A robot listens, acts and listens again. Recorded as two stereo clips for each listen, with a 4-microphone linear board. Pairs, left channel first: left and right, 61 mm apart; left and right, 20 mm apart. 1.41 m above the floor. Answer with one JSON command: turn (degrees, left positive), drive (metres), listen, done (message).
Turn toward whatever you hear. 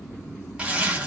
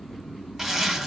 {"turn": -20}
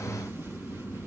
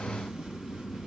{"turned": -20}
{"listen": true}
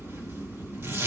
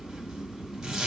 {"turn": -135}
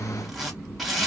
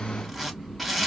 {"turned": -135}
{"done": "Found it: a zipper, straight ahead."}